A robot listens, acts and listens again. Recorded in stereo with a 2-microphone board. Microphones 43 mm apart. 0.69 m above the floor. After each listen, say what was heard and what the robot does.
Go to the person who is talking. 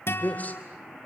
The man speaking: about 40° left or 140° left. Turn 40° left.
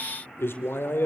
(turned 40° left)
So it is at 95° left. Turn 95° left.
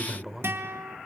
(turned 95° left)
The man speaking is now 10° right. Turn 10° right.
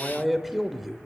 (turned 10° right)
Drive 1.0 m forward.
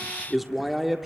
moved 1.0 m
Drive 1.0 m forward.
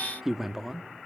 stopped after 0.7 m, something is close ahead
The man speaking is now 10° right. Turn 10° right.
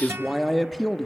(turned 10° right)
I am next to the man speaking.